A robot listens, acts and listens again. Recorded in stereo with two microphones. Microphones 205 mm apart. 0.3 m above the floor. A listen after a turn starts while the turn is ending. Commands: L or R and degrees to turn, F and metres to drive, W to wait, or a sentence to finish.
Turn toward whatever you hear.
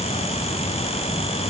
W
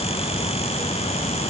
W
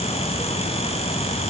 I can't make out anything.